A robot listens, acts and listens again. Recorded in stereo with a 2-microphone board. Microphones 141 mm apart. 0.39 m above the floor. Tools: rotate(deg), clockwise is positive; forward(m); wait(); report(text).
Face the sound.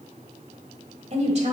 rotate(50)
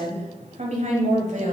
rotate(65)
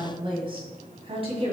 rotate(45)
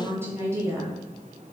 rotate(20)
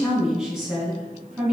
report("Facing the woman speaking, 2 to 4 m away.")